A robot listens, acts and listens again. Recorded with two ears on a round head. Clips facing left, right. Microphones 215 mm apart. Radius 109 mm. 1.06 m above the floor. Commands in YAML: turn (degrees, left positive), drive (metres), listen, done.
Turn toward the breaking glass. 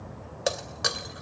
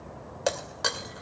turn: 30
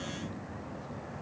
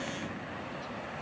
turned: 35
listen: true
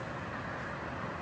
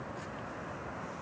done: "I heard breaking glass, but can't make it out now. It was about 30° right or 140° left."